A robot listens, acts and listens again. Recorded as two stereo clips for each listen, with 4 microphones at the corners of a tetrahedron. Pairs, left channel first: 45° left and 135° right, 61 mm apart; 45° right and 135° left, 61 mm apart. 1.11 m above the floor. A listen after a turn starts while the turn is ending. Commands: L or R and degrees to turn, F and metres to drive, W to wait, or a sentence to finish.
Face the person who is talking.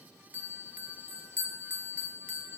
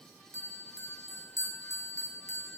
W
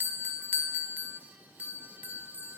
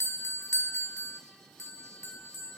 W
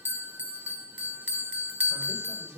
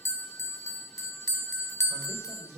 R175
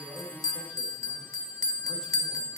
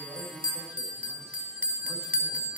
W
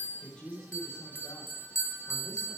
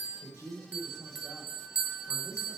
R30
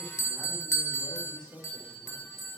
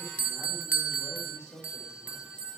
R25
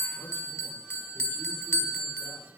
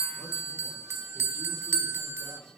W
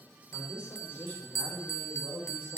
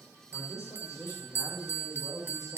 R10
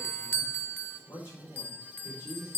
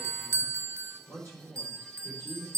Facing the man speaking.